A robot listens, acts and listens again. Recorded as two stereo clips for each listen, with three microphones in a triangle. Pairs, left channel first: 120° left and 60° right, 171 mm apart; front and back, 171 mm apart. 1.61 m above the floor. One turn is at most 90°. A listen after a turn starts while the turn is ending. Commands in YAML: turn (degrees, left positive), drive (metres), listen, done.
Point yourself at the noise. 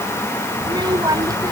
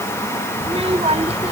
turn: -90
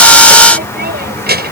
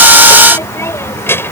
turn: -80
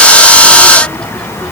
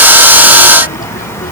turn: 35
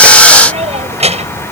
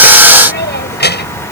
turn: -10
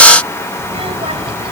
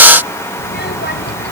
done: "Facing the child speaking."